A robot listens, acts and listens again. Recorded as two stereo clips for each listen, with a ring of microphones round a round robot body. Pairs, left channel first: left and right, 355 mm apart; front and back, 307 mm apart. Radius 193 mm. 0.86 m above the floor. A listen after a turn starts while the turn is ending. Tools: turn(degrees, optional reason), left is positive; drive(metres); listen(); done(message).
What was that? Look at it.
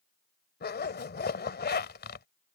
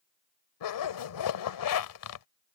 turn(degrees=25, reason="The zipper: 25° left.")
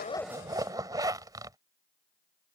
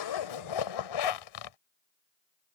turn(degrees=-10, reason="The zipper is now 10° right.")
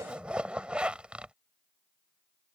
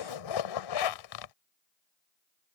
done("Found it: a zipper, straight ahead.")